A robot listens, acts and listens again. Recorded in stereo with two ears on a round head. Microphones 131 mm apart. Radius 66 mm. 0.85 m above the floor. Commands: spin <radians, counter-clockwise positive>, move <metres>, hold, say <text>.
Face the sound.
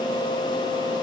hold
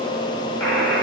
spin 0.52
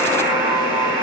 spin -0.44
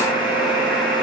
say Found it: a buzzer, straight ahead.